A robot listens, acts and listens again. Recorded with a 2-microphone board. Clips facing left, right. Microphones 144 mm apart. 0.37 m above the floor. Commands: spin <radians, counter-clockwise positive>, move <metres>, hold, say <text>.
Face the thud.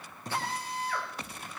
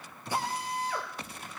spin 0.79
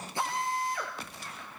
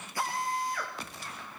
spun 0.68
hold
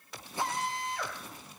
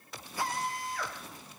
say I heard a thud, but can't make it out now. It was about 5° left or 100° left.